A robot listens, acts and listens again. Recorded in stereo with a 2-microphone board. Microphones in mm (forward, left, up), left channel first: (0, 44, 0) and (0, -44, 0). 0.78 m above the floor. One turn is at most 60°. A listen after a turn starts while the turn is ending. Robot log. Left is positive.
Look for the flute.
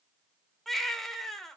cmd idle
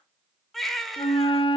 cmd yaw +60
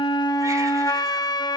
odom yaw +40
note: So it is at 50° left.
cmd yaw +50
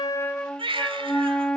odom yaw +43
note: The flute is now 10° left.
cmd yaw +10
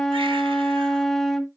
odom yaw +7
end: Facing the flute, under 1 m away.